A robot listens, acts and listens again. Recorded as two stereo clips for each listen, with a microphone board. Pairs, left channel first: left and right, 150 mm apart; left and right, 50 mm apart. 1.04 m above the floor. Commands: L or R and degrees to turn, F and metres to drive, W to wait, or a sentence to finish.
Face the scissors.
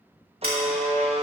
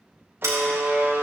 R90
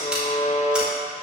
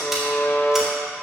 W
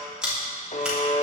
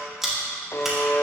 Found it: scissors, straight ahead.